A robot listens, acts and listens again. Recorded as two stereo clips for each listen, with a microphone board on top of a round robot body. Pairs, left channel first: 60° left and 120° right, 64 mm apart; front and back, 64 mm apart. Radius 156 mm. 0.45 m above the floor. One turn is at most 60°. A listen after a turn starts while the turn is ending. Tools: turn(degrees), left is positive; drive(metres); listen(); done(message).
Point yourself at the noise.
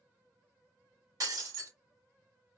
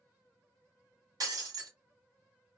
turn(degrees=-60)
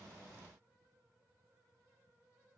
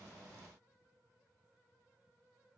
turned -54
turn(degrees=-60)
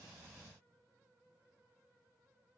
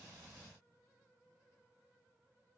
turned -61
turn(degrees=-40)
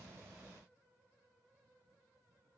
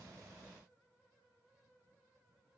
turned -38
done("I heard breaking glass from this way, but can't make it out now.")